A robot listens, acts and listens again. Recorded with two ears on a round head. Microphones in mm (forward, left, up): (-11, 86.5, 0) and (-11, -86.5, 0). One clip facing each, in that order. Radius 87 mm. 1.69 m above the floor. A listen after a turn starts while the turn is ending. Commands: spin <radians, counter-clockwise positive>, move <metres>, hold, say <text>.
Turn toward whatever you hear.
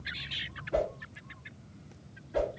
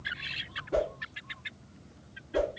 spin -0.87
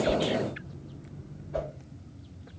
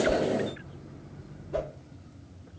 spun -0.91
spin -1.22
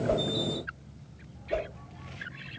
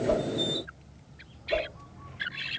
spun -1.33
spin 0.17
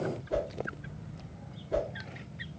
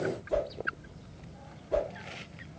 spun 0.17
say Found it: a whoosh, straight ahead.